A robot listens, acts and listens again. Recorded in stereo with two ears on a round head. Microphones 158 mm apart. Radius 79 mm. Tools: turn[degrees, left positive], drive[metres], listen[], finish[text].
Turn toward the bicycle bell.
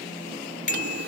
Thought: The bicycle bell: about 50° left or 130° left.
Action: turn[50]
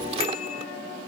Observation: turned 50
Action: listen[]
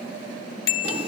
Thought: So it is at 85° left.
Action: turn[85]
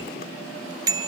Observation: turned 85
Thought: The bicycle bell is now 20° right.
Action: turn[-20]
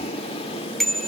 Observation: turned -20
Action: finish[Facing the bicycle bell.]